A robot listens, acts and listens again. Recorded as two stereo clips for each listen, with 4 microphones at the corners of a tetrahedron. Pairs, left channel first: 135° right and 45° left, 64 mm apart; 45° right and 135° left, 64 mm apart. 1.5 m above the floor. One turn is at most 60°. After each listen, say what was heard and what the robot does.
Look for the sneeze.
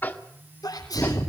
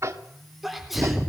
The sneeze: 140° right. Turn 60° right.
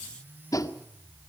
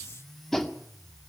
Nothing new. It was at 80° right. Turn 60° right.
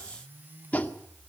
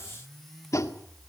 Nothing new. It was at 20° right. Turn 20° right.
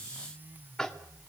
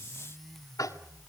Facing where the sneeze came from. I can't hear it now.